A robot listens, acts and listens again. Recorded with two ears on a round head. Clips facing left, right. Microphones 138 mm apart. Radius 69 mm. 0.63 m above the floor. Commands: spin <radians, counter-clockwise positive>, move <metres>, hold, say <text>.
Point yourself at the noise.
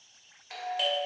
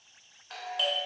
spin 0.52
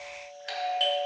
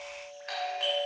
spin 2.44
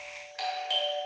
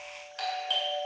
spin 0.17
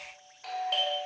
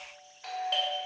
say Found it: a doorbell, straight ahead, 2 to 4 m away.